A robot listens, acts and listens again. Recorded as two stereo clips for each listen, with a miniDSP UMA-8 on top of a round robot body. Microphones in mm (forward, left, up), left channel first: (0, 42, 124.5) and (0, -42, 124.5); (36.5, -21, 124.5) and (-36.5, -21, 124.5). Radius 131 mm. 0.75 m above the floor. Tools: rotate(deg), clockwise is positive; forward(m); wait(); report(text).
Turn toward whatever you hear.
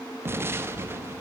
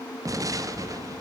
rotate(150)
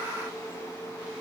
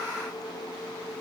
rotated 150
report("Facing where the explosion came from. I can't hear it now.")